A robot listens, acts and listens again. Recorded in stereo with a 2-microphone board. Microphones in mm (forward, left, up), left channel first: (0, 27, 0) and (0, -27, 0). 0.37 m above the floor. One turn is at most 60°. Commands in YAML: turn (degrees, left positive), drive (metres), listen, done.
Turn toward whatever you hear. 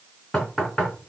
turn: 30
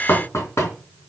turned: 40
turn: 60
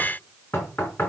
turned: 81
turn: 45
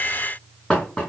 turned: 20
turn: 20
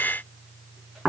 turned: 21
done: "Found it: knocking, straight ahead."